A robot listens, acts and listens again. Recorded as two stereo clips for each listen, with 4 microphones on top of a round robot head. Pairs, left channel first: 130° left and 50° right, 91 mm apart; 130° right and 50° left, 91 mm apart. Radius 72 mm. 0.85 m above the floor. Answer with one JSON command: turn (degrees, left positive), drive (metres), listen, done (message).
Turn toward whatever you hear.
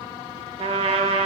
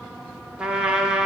{"turn": -30}
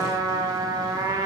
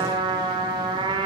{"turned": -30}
{"done": "Facing the trumpet, under 1 m away."}